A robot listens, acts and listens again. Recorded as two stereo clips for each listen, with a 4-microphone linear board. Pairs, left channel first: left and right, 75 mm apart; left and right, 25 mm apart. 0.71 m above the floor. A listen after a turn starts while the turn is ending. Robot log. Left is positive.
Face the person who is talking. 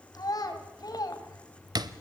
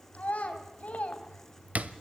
note: The child speaking: about 60° left or 120° left.
cmd yaw +60
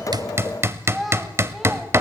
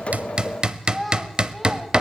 end: Facing the child speaking, 2 to 4 m away.